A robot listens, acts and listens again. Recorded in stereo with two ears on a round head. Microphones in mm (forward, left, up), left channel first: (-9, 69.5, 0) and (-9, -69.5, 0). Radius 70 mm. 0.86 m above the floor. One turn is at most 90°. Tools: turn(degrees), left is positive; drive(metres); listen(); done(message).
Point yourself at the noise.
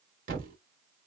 turn(degrees=-60)
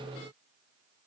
listen()
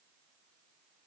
done("I heard a thud, but can't make it out now. It was about straight ahead or 60° right.")